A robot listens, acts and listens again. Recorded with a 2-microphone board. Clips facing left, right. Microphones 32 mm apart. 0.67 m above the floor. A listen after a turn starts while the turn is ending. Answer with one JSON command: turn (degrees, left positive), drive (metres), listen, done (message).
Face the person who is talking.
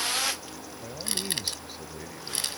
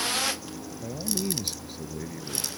{"turn": 30}
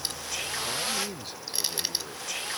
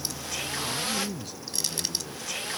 {"turn": 145}
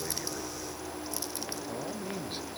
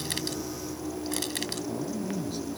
{"listen": true}
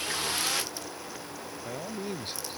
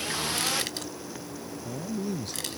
{"turn": 35}
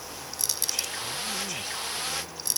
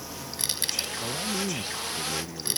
{"listen": true}
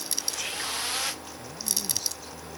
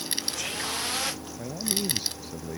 {"turn": -25}
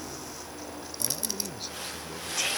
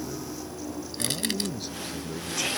{"done": "Facing the man speaking."}